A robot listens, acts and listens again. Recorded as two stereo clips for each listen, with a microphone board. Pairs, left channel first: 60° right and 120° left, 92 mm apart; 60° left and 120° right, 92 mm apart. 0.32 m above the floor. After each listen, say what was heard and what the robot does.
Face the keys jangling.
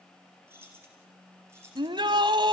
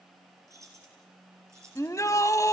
The keys jangling: straight behind. Turn 180° left.
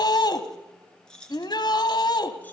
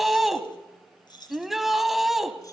The keys jangling is now 20° left. Turn 20° left.
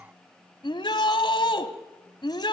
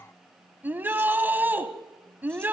Keep listening.
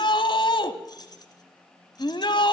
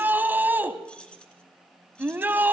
The keys jangling is now 20° right. Turn 20° right.
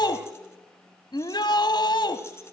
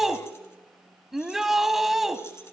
Keep listening.
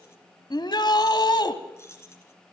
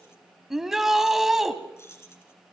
Facing the keys jangling.